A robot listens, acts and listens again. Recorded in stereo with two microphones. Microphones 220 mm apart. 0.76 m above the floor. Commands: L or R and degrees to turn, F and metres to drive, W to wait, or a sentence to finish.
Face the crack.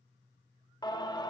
W
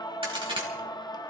R25
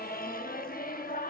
W
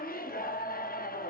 I heard a crack, but can't make it out now. It was about straight ahead or 130° right.